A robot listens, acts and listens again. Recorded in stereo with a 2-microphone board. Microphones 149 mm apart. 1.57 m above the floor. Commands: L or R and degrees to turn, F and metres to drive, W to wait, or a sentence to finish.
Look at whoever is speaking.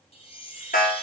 W
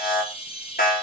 W
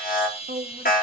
R90
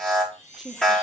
Facing the woman speaking, 1 to 2 m away.